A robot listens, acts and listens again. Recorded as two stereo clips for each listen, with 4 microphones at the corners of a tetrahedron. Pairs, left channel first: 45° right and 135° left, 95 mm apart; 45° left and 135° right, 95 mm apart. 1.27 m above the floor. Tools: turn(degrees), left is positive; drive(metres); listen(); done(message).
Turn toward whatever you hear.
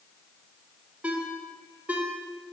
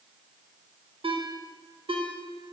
turn(degrees=-150)
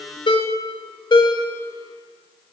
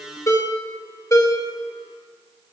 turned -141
turn(degrees=-10)
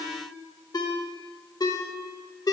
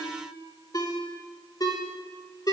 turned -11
done("Found it: a ringtone, straight ahead.")